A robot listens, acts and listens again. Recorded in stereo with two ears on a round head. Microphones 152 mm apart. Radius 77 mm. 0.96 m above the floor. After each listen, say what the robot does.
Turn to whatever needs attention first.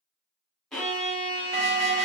Turn 40° right.
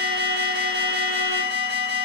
Turn 100° right.
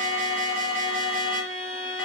Facing the alarm, 2 to 4 m away.